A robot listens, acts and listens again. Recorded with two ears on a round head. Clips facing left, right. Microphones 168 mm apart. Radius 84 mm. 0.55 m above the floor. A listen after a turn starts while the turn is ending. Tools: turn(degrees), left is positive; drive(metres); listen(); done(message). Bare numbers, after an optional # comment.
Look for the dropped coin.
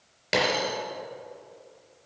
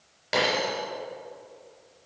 # The dropped coin: about 30° left or 150° left.
turn(30)
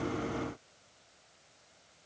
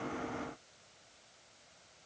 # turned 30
listen()
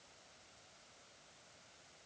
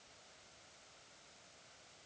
done("I heard a dropped coin, but can't make it out now. It was about straight ahead or 120° left.")